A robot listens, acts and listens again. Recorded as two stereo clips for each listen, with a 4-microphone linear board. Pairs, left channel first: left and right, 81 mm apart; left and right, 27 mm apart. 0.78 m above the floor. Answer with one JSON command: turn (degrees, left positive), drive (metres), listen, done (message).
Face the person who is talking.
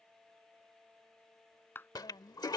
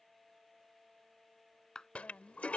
{"turn": 70}
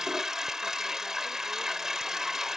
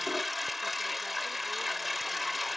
{"listen": true}
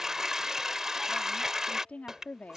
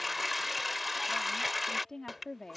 {"turn": 15}
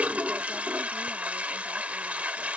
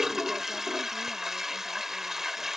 {"listen": true}
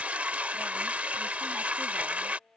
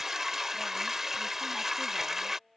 {"listen": true}
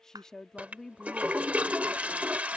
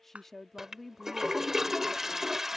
{"done": "Found it: a woman speaking, straight ahead."}